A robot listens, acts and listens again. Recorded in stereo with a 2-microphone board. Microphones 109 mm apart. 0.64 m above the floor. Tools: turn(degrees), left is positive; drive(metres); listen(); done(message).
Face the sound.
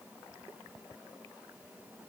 listen()
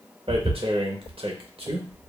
turn(degrees=-55)
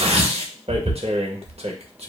turn(degrees=-65)
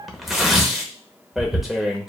done("Found it: tearing paper, straight ahead.")